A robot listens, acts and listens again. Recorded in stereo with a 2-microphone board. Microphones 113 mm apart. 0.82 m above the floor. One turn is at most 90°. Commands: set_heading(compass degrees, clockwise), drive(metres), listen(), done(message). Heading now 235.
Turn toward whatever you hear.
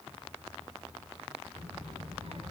set_heading(295)
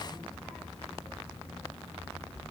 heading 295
done("Found it: a child speaking, straight ahead, 2 to 4 m away.")